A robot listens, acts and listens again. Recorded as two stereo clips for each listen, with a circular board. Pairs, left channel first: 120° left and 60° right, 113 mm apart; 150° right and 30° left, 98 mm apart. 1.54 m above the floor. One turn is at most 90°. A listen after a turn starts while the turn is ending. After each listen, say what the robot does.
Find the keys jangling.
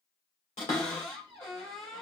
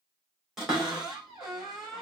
Keep listening.
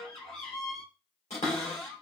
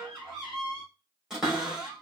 Keep listening.
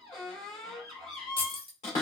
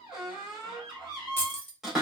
Turn 90° left.
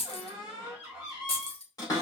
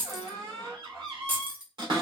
Turn 90° left.
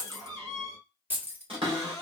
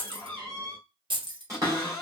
Turn 10° left.
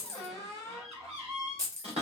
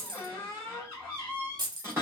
Facing the keys jangling, under 1 m away.